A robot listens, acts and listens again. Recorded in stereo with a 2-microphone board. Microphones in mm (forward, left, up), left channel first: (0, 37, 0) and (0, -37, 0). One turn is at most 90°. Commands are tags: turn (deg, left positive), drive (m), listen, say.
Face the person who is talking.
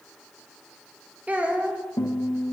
<turn deg="-20"/>
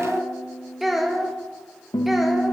<say>Facing the child speaking.</say>